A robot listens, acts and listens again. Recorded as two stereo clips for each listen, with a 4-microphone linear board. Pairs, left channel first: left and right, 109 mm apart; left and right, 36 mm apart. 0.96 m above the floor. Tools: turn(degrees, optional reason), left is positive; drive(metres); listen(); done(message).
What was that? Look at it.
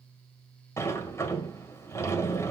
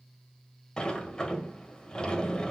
turn(degrees=25, reason="The sliding door: about 25° left or 155° left.")
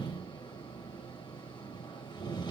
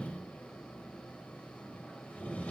turn(degrees=135, reason="So it is at 135° left.")
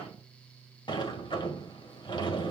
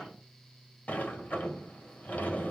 turn(degrees=50, reason="The sliding door is now 50° left.")
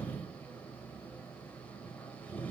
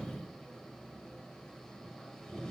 turn(degrees=15, reason="The sliding door is now 15° left.")
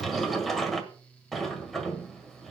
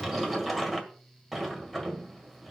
done("Facing the sliding door.")